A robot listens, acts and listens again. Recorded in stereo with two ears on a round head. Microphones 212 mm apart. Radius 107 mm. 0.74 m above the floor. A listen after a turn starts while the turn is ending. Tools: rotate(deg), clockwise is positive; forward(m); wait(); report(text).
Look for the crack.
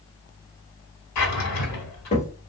rotate(-30)
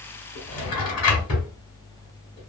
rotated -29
wait()
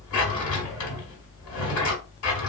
report("I heard a crack, but can't make it out now. It was about straight ahead or 125° left.")